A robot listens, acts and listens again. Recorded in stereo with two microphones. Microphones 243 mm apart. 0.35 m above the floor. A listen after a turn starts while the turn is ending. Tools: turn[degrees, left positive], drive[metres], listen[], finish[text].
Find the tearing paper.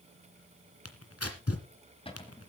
Thought: The tearing paper: about 75° left or 105° left.
Action: turn[75]
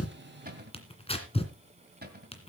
Thought: So it is at 25° left.
Action: turn[25]
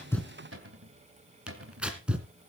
Action: finish[Facing the tearing paper, 2 to 4 m away.]